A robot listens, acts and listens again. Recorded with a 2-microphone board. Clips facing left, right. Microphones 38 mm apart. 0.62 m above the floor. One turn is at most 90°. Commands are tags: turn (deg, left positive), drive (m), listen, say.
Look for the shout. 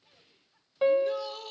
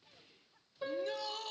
<turn deg="30"/>
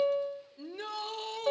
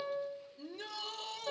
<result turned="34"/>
<turn deg="90"/>
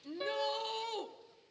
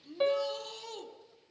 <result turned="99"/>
<turn deg="35"/>
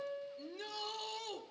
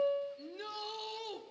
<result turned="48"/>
<turn deg="-15"/>
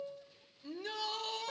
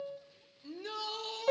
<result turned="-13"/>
<say>Facing the shout.</say>